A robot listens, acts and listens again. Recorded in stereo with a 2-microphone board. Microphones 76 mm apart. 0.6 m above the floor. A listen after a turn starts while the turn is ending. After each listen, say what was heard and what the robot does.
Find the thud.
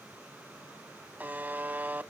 Keep listening.
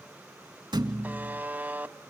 Turn 90° right.
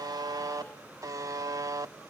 I heard a thud from this way, but can't make it out now.